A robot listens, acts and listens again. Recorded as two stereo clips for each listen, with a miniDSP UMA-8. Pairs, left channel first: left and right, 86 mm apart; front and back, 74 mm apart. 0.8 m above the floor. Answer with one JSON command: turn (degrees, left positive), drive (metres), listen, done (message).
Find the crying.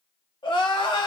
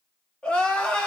{"turn": 75}
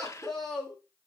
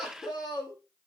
{"done": "Facing the crying, 1 to 2 m away."}